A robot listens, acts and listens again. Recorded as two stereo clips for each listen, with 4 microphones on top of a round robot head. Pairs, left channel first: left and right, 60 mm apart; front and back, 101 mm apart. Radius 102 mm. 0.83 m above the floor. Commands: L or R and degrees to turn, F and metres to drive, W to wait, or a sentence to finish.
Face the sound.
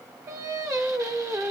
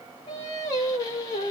R60
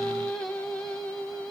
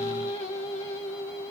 L15
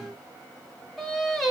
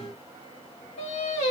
Facing the singing, 1 to 2 m away.